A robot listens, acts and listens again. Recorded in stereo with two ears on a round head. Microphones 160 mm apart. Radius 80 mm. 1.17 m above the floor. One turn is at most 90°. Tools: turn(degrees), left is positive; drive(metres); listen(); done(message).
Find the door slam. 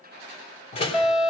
turn(degrees=35)
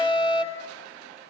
listen()
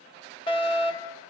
done("I heard a door slam, but can't make it out now. It was about straight ahead or 110° left.")